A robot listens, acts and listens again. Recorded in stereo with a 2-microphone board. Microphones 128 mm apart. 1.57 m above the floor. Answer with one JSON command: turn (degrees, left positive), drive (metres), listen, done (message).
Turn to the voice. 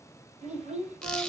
{"turn": -60}
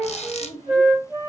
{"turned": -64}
{"turn": -55}
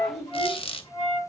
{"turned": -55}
{"done": "Found it: a child speaking, straight ahead, over 4 m away."}